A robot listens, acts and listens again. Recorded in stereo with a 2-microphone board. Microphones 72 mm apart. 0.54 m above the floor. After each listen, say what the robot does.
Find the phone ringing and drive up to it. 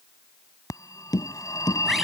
Turn 50° left.
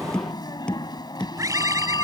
Turn 80° left.
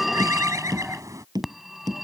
Drive 1.0 m forward.
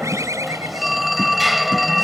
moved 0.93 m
Drive 1.0 m forward.
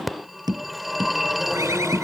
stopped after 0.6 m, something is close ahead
Arrived at the phone ringing, straight ahead.